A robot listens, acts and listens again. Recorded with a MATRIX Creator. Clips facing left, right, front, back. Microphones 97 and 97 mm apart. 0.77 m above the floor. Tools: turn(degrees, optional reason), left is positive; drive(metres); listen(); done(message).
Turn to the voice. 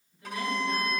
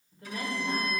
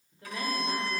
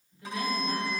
turn(degrees=-45, reason="The woman speaking: 45° right.")
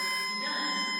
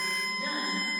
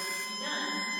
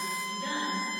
listen()
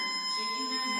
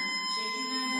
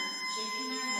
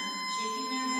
listen()
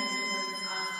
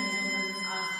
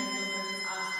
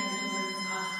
done("I heard a woman speaking from this way, but can't make it out now.")